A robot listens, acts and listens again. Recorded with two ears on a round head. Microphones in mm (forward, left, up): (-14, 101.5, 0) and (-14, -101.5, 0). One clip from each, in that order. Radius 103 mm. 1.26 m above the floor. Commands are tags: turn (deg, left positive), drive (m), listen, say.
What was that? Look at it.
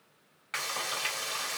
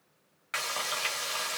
<turn deg="-30"/>
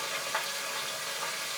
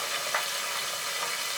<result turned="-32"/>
<turn deg="-140"/>
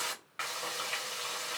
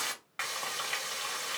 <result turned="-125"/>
<turn deg="-15"/>
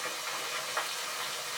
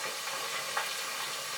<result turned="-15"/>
<say>Found it: frying, straight ahead.</say>